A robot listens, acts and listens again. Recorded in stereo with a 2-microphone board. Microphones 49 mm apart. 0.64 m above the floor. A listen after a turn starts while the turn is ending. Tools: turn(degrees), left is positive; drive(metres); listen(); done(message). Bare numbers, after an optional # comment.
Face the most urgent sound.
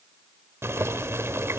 listen()
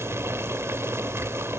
listen()
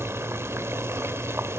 done("I can't make out anything urgent to turn to.")